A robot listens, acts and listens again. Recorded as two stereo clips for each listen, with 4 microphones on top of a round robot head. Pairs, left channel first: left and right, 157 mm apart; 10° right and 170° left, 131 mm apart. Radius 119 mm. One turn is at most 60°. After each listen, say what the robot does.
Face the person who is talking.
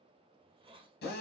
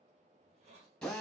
Keep listening.
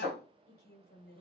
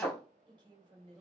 Turn 60° left.
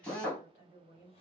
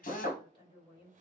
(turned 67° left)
Turn 40° left.
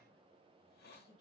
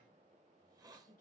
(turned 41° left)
Facing the woman speaking.